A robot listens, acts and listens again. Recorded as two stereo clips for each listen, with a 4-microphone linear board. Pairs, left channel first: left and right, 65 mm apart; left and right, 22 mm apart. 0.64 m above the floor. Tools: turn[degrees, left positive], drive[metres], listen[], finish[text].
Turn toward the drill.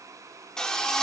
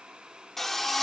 Action: turn[30]
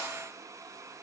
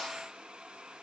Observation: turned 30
Action: listen[]
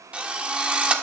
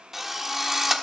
Thought: So it is at 20° right.
Action: turn[-20]
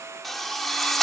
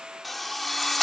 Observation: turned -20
Action: finish[Facing the drill.]